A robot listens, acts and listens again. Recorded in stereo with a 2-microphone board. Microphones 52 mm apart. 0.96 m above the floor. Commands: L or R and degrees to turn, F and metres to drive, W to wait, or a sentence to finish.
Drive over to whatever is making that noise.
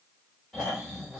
L30
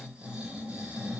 R20
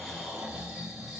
F1.0
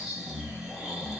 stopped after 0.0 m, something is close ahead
Blocked. The snoring is further on, straight ahead.